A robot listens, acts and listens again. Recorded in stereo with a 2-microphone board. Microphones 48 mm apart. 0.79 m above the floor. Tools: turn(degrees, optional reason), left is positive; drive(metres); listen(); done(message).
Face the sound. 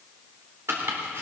turn(degrees=-60, reason="The chopping: about 60° right or 120° right.")
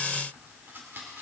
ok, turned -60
turn(degrees=-55, reason="So it is at 55° right.")
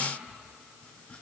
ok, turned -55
listen()
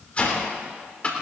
turn(degrees=30, reason="The chopping is now 30° left.")
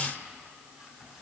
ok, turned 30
listen()
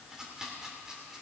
turn(degrees=-10, reason="The chopping is now 10° right.")
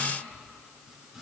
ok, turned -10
listen()
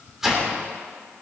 done("Facing the chopping.")